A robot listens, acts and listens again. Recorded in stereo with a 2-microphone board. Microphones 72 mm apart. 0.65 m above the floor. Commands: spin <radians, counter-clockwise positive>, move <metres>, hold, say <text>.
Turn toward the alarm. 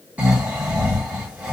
hold
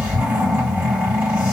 hold
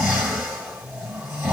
say I can't make out an alarm to turn to.